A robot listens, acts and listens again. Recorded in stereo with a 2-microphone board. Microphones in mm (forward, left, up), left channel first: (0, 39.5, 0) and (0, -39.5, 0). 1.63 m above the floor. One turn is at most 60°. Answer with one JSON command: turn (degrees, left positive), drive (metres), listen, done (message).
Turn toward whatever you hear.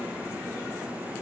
{"listen": true}
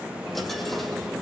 {"turn": 30}
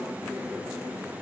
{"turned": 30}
{"listen": true}
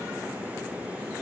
{"done": "I heard a dropped coin, but can't make it out now. It was about 30° right or 150° left."}